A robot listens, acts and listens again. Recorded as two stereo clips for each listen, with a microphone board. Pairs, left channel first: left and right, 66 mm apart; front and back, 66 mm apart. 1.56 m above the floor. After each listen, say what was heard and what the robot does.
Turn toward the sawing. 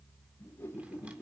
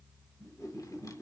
Keep listening.
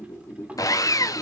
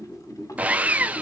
The sawing: 115° left. Turn 115° left.
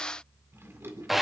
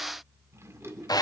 Found it: sawing, straight ahead, under 1 m away.